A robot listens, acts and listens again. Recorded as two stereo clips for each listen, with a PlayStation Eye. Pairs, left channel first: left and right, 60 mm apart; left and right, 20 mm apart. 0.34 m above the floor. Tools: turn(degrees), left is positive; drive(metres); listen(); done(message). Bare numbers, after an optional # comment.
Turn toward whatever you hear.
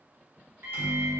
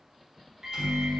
# The microwave: about 40° right or 140° right.
turn(-40)
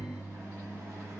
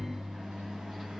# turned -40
# So it is at 90° right.
turn(-90)
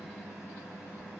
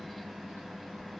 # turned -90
done("Facing the microwave.")